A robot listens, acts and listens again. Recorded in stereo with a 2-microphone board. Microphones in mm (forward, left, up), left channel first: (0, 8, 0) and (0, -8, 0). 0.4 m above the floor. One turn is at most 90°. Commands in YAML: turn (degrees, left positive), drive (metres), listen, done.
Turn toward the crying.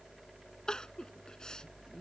turn: 50
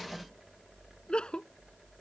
turn: 80
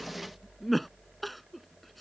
done: "Facing the crying."